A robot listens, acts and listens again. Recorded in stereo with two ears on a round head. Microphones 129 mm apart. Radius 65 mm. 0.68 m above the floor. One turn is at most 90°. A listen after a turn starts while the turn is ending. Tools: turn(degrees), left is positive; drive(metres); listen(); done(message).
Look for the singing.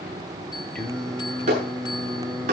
turn(degrees=-30)
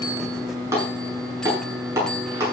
turn(degrees=30)
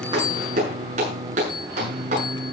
turn(degrees=-55)
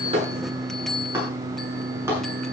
turn(degrees=-20)
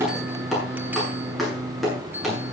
done("Found it: singing, straight ahead, 2 to 4 m away.")